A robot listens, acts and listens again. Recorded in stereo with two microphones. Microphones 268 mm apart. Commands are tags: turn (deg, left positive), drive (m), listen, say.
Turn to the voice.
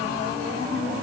<listen/>
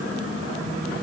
<listen/>
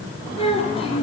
<turn deg="20"/>
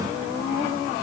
<listen/>
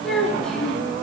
<say>Facing the child speaking, 2 to 4 m away.</say>